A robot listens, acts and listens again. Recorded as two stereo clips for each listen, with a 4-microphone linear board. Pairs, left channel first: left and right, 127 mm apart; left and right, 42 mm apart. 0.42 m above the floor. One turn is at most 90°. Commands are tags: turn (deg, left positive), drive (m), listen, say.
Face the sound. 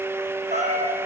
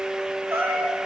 <turn deg="-60"/>
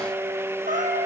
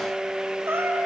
<turn deg="-70"/>
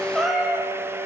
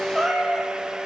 <say>Facing the cat meowing.</say>